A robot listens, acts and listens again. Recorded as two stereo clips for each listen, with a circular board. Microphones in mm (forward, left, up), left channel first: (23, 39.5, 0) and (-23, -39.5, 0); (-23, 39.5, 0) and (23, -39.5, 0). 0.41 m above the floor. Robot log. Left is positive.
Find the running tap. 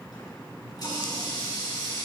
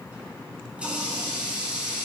note: The running tap: 15° left.
cmd yaw +15
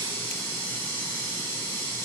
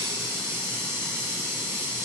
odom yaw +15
end: Facing the running tap.